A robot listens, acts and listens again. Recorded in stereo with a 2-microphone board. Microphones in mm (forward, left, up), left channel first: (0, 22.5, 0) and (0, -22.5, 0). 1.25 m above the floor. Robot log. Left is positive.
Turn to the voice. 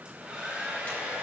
cmd idle
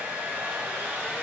cmd idle
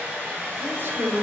note: The man speaking: about 55° right or 125° right.
cmd yaw -55
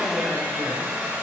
cmd idle
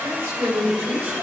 note: So it is at 70° right.
cmd yaw -70
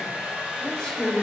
note: The man speaking is now 15° left.
cmd yaw +15
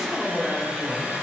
end: Facing the man speaking.